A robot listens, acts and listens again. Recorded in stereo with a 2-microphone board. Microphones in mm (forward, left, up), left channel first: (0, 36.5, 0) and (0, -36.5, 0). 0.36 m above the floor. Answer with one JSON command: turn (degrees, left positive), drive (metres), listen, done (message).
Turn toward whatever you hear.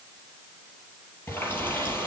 {"turn": 30}
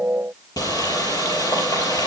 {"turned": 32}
{"turn": 120}
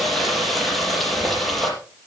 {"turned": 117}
{"done": "Found it: a running tap, straight ahead."}